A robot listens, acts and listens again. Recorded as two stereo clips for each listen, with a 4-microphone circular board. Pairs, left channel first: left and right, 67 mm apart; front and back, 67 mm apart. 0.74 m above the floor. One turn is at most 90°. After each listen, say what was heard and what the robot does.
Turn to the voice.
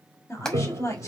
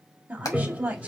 The woman speaking: 115° left. Turn 90° left.
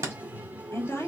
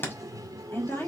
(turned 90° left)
The woman speaking is now 50° left. Turn 50° left.
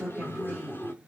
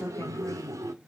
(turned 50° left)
Keep listening.
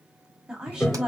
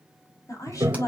The woman speaking is now 15° right. Turn 15° right.
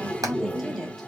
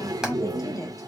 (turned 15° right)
Facing the woman speaking.